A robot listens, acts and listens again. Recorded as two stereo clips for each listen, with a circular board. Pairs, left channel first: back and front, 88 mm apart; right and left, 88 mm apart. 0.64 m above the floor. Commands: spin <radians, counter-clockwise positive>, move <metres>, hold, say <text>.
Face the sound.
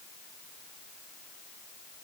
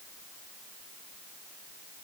hold
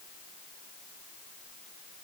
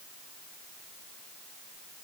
hold
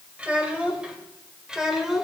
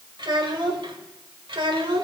spin 1.48
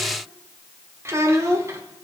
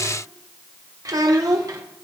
spin 0.87
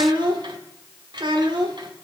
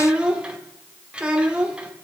spin 0.26
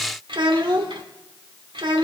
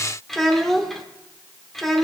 say Facing the child speaking, 1 to 2 m away.